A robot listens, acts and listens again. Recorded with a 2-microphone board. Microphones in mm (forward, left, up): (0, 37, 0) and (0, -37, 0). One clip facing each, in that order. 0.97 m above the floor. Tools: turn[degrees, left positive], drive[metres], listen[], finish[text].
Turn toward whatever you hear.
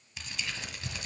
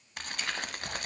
Thought: The crumpling: about 55° right or 125° right.
Action: turn[-55]
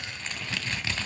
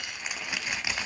Thought: So it is at 15° right.
Action: turn[-15]
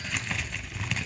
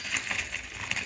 Action: finish[Found it: crumpling, straight ahead, 1 to 2 m away.]